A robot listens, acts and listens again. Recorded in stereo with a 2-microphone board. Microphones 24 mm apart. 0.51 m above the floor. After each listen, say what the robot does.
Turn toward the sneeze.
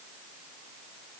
Keep listening.
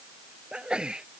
Turn 45° right.
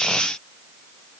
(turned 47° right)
Keep listening.
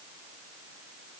I heard a sneeze, but can't make it out now. It was about straight ahead or 90° right.